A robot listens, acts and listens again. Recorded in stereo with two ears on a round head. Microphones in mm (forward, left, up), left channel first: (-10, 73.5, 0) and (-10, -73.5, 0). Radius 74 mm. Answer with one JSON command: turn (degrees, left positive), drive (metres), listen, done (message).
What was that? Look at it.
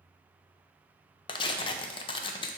{"turn": 30}
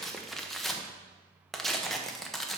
{"done": "Facing the tearing paper."}